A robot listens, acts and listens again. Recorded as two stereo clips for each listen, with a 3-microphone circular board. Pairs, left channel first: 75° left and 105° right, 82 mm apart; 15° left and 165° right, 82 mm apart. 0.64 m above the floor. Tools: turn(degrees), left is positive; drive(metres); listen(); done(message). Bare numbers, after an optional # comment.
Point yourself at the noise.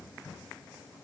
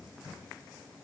listen()
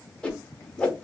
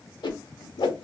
done("Found it: a whoosh, straight ahead, under 1 m away.")